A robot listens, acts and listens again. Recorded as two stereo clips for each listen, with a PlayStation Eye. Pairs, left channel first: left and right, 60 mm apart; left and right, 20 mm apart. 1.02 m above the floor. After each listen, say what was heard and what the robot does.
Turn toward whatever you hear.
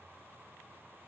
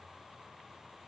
Keep listening.
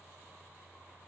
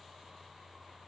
Keep listening.
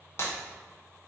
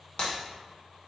The breaking glass: about 55° left or 125° left. Turn 55° left.
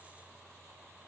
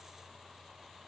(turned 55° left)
Keep listening.
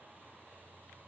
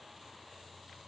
I heard breaking glass, but can't make it out now. It was about straight ahead or 70° left.